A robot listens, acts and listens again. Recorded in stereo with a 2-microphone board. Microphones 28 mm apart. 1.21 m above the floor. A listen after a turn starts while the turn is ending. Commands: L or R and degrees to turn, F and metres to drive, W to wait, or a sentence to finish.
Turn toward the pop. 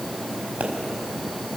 R90
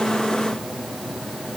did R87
I heard a pop from this way, but can't make it out now.